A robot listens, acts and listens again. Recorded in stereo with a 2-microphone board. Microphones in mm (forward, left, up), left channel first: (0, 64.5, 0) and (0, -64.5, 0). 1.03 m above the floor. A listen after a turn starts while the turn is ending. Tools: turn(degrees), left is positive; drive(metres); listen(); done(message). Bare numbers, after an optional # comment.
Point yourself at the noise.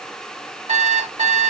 # The alarm clock: about 65° right or 115° right.
turn(-65)
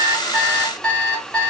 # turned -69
done("Found it: an alarm clock, straight ahead, 1 to 2 m away.")